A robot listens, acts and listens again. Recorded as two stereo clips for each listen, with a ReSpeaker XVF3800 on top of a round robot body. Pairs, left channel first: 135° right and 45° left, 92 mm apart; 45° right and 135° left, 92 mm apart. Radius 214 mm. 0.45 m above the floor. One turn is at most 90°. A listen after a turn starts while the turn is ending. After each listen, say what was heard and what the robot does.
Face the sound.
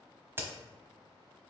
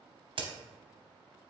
The crack: 110° left. Turn 90° left.
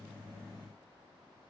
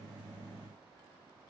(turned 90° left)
Nothing new. It was at 20° left. Turn 20° left.
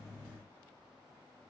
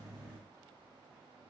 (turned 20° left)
I heard a crack from this way, but can't make it out now.